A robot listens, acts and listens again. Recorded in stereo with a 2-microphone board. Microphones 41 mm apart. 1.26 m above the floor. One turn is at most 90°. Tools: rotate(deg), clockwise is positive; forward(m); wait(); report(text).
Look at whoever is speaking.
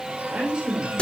rotate(25)
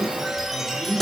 rotate(40)
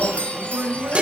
rotate(90)
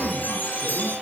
rotate(15)
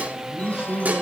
rotate(10)
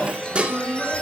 report("Facing the man speaking, over 4 m away.")